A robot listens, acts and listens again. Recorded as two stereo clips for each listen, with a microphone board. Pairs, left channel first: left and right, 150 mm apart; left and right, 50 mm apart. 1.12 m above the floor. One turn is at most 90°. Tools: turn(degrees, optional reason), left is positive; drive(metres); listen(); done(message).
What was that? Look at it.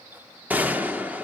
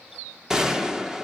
turn(degrees=-30)
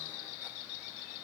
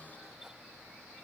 listen()
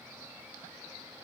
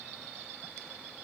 done("I heard a gunshot, but can't make it out now. It was about 20° left or 140° right.")